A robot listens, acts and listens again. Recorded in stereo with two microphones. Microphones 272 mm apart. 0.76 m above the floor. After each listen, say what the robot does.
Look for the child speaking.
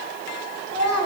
Turn 35° right.
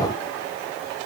Keep listening.
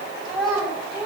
Found it: a child speaking, straight ahead, 2 to 4 m away.